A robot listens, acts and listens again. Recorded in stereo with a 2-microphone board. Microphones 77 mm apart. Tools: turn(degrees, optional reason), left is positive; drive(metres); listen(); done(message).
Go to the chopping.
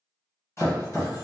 turn(degrees=35, reason="The chopping: about 35° left or 145° left.")
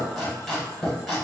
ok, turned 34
drive(metres=1.0)
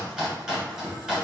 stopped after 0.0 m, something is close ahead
turn(degrees=-10, reason="The chopping is now 10° right.")
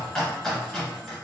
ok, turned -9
done("Something is in my way. I am facing the chopping but have not reached it.")